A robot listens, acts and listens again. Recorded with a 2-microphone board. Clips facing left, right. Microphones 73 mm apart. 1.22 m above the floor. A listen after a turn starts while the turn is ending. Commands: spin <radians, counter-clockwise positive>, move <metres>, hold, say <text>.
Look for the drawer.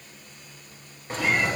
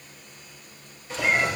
spin 0.79
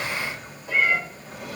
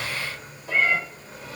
spin 1.57
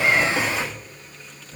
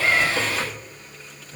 say Facing the drawer.